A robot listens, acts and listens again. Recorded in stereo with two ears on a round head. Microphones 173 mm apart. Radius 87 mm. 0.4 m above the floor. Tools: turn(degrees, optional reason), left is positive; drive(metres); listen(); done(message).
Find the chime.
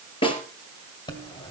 turn(degrees=25, reason="The chime: about 25° left or 155° left.")
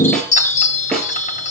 turn(degrees=130, reason="So it is at 130° left.")
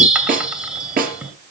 done("Found it: a chime, straight ahead, 2 to 4 m away.")